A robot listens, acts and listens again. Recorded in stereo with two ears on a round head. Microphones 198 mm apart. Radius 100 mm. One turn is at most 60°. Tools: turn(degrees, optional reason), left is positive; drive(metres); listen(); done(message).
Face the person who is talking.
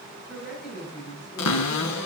turn(degrees=-30)
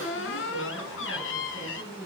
turn(degrees=20, reason="So it is at 20° left.")
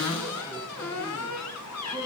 listen()
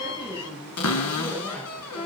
turn(degrees=-10, reason="The woman speaking is now 10° right.")
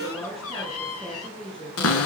done("Found it: a woman speaking, straight ahead, over 4 m away.")